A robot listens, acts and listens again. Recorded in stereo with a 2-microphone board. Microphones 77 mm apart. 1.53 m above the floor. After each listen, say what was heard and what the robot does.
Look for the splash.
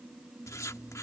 Keep listening.
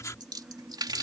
The splash: about 65° right or 115° right. Turn 65° right.
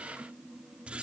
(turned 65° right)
Keep listening.
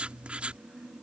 I heard a splash, but can't make it out now. It was about straight ahead or 50° right.